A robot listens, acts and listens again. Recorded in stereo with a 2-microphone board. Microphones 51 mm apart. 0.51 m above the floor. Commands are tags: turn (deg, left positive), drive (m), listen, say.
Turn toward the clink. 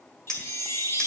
<turn deg="15"/>
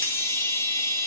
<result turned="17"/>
<listen/>
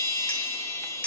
<turn deg="150"/>
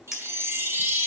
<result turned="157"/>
<turn deg="-10"/>
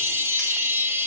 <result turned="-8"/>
<listen/>
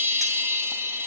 <listen/>
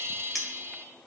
<say>Facing the clink, 1 to 2 m away.</say>